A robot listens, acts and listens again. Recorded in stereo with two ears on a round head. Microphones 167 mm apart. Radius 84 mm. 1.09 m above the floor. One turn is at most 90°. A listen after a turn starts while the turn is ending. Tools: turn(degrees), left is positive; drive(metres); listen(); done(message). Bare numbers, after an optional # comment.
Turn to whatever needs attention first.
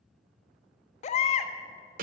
# The baby crying: about 40° left or 140° left.
turn(40)
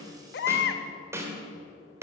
# So it is at 95° left.
turn(90)
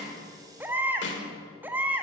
# The baby crying is now 10° right.
turn(-10)
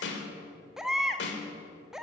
done("Found it: a baby crying, straight ahead, under 1 m away.")